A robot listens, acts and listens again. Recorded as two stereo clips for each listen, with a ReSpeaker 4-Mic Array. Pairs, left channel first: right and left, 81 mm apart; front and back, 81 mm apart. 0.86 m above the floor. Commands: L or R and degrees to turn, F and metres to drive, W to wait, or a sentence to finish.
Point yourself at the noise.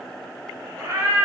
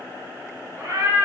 L125
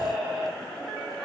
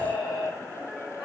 Facing the cat meowing, 1 to 2 m away.